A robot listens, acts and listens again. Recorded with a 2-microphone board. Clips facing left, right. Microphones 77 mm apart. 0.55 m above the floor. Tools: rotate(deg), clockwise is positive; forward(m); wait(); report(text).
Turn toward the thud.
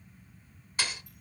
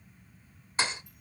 rotate(30)
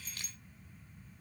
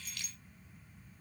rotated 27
wait()
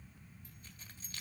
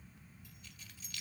report("I heard a thud, but can't make it out now. It was about straight ahead or 125° right.")